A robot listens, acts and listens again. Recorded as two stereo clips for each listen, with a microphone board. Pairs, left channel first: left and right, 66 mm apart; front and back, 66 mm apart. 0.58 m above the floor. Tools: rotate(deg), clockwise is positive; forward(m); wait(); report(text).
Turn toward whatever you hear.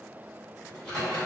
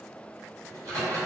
rotate(-170)
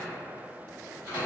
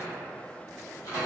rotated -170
rotate(20)
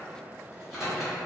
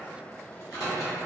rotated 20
report("Found it: a microwave, straight ahead, 1 to 2 m away.")